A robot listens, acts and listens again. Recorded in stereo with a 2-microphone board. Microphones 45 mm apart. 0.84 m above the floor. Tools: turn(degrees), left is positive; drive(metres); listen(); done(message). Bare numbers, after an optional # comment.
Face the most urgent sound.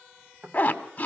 listen()
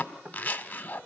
listen()
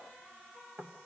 done("I can't make out anything urgent, only a zipper and knocking.")